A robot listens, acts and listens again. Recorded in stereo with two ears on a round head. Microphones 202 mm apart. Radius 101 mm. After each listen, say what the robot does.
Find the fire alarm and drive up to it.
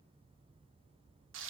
Keep listening.
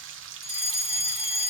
Turn 25° right.
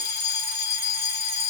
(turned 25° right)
Drive 1.0 m forward.
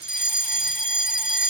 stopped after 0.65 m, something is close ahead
I am next to the fire alarm.